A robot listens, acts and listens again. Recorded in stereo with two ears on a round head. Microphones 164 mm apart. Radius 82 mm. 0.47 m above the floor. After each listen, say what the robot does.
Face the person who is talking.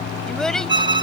Turn 30° left.
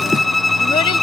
Keep listening.
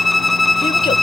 Keep listening.
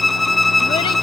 I heard a child speaking, but can't make it out now. It was about 25° right or 145° left.